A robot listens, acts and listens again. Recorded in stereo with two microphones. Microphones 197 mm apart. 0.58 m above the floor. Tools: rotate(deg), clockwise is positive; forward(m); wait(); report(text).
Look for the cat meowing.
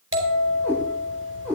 rotate(-30)
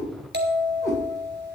rotate(-145)
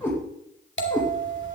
rotate(-15)
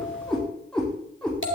report("Found it: a cat meowing, straight ahead, over 4 m away.")